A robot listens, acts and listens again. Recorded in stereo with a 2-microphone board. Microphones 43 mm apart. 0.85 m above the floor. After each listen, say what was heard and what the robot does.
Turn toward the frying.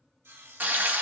The frying: about 50° right or 130° right. Turn 50° right.
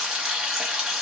So it is at 15° right. Turn 15° right.
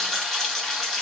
Facing the frying.